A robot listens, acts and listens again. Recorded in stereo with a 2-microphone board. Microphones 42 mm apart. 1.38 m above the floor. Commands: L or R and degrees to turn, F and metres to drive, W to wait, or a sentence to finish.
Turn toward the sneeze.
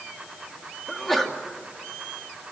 L30
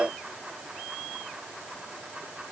W
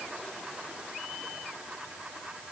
I heard a sneeze, but can't make it out now. It was about 25° right or 145° left.